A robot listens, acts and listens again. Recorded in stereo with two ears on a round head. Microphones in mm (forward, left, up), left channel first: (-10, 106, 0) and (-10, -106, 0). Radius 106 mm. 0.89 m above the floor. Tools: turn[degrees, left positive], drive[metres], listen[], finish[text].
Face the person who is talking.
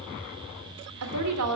Action: turn[-90]
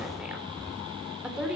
Action: finish[Facing the woman speaking.]